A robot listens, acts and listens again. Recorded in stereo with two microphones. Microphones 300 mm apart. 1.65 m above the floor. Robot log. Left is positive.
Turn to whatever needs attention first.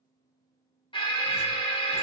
note: The alarm: about 15° left or 165° left.
cmd yaw +15
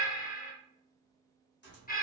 note: So it is at 150° left.
cmd yaw +150
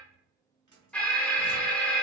end: Found it: an alarm, straight ahead.